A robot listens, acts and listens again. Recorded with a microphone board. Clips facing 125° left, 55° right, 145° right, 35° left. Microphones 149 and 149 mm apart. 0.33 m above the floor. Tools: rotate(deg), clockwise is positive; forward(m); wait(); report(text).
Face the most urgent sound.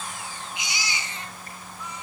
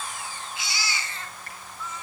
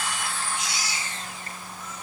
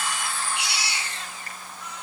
rotate(-50)
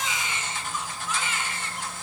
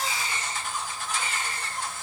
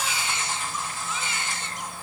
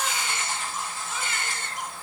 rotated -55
report("Found it: a baby crying, straight ahead, 2 to 4 m away.")